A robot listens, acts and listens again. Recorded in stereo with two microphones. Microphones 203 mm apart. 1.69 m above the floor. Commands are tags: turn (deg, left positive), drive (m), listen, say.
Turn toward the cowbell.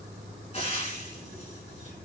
<listen/>
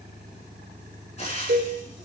<turn deg="-70"/>
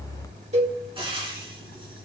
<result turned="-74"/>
<turn deg="-35"/>
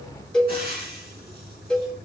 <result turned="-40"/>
<say>Found it: a cowbell, straight ahead.</say>